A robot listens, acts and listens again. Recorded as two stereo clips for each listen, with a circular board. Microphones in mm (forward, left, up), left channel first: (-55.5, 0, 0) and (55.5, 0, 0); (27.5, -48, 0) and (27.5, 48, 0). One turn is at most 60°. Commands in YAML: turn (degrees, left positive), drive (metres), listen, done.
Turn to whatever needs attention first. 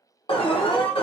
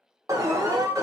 turn: 60
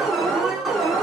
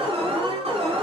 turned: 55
turn: 60
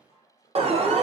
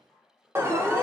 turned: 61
turn: 25
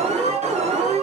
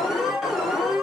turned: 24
done: "Facing the alarm, under 1 m away."